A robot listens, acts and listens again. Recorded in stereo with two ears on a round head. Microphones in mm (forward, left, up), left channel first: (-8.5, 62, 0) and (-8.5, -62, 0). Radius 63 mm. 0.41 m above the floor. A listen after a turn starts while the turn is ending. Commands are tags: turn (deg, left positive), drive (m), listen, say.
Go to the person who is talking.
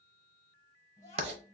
<turn deg="20"/>
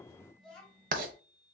<drive m="1.0"/>
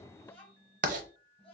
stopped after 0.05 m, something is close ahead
<turn deg="10"/>
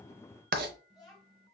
<say>Something is in my way. I am facing the child speaking but have not reached it.</say>